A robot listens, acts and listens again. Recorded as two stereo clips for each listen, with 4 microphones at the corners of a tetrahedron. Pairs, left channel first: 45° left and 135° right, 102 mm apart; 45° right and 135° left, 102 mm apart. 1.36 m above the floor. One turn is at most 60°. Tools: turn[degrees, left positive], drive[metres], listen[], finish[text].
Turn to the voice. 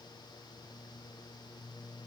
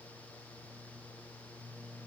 Action: listen[]
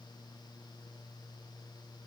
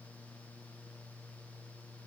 Action: listen[]
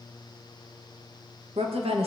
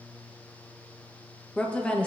Thought: The woman speaking: 125° right.
Action: turn[-60]
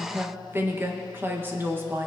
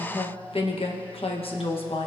Thought: The woman speaking is now 65° right.
Action: turn[-60]
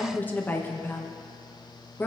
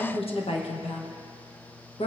Thought: The woman speaking is now 25° right.
Action: turn[-25]
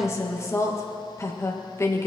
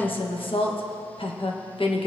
Thought: The woman speaking is now 15° right.
Action: turn[-15]
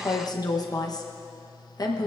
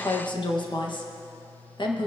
Action: finish[Facing the woman speaking.]